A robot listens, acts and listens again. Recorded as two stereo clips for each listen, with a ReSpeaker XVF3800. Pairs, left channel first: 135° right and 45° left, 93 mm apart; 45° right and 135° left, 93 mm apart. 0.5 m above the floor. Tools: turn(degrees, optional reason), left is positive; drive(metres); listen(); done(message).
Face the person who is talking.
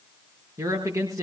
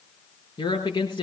turn(degrees=-10, reason="The woman speaking: 10° right.")
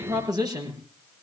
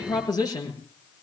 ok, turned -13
done("Found it: a woman speaking, straight ahead.")